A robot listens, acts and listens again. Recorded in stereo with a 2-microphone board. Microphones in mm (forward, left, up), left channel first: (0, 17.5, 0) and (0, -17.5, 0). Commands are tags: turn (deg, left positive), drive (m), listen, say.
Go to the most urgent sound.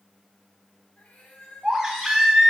<turn deg="-15"/>
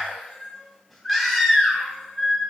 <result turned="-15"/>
<drive m="1.0"/>
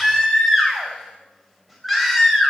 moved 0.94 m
<drive m="1.0"/>
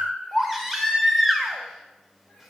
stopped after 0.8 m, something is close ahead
<turn deg="-10"/>
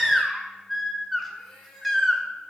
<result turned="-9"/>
<say>Arrived at the baby crying, straight ahead.</say>